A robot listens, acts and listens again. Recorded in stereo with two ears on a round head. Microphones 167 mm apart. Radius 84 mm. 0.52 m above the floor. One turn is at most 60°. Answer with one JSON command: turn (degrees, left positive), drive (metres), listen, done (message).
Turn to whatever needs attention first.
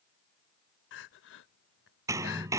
{"turn": 60}
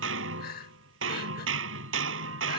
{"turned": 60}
{"turn": 50}
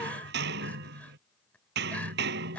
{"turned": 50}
{"turn": 10}
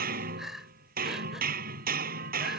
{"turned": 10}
{"done": "Facing the crying."}